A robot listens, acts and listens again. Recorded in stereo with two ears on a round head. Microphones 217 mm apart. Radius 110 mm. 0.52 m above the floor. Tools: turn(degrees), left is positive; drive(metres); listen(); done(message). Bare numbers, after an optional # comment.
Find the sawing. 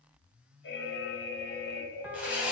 turn(-30)
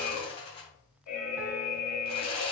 # So it is at 25° left.
turn(25)
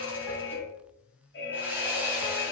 # The sawing is now 10° right.
turn(-10)
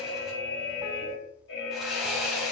done("Found it: sawing, straight ahead.")